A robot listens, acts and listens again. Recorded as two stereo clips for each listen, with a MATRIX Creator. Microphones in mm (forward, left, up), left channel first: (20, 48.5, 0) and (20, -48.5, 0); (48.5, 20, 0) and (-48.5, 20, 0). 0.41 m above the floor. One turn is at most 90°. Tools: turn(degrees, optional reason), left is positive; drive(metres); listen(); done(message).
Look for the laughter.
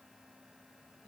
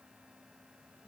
listen()
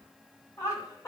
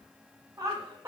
turn(degrees=90, reason="The laughter: 130° left.")
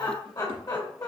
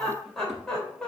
turn(degrees=80, reason="The laughter is now 80° left.")
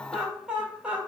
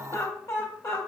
turn(degrees=-25, reason="The laughter is now 25° right.")
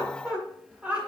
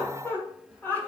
turn(degrees=-40, reason="The laughter is now 40° right.")
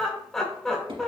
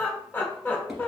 turn(degrees=10, reason="The laughter is now 10° left.")
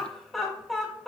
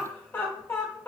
done("Found it: laughter, straight ahead.")